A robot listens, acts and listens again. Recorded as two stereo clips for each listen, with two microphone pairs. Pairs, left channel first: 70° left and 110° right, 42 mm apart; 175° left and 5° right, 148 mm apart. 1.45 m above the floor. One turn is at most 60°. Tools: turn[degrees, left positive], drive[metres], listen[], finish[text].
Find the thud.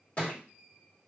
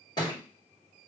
Thought: The thud: 120° left.
Action: turn[60]
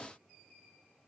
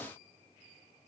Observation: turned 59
Thought: Nothing new. It was at 60° left.
Action: turn[60]
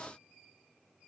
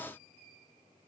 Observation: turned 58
Action: finish[I heard a thud from this way, but can't make it out now.]